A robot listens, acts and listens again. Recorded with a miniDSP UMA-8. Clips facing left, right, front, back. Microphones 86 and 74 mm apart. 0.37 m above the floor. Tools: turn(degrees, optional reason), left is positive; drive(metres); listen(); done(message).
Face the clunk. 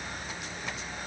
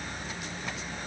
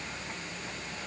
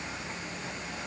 listen()
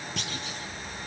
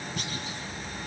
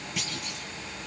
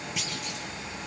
turn(degrees=90, reason="The clunk: 90° left.")
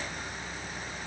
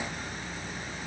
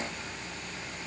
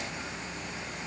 done("Facing where the clunk came from. I can't hear it now.")